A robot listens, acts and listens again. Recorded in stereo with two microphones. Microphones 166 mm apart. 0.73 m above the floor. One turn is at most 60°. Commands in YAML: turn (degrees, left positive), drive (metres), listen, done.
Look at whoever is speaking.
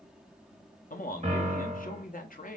turn: 55
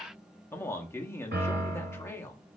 turn: 15
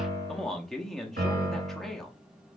done: "Found it: a man speaking, straight ahead, under 1 m away."